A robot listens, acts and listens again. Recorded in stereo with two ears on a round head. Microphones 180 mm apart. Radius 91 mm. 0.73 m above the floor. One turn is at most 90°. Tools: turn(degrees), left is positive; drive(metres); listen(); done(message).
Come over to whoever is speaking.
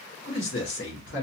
turn(degrees=55)
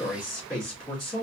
drive(metres=1.0)
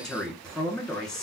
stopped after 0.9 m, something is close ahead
done("I am next to the man speaking.")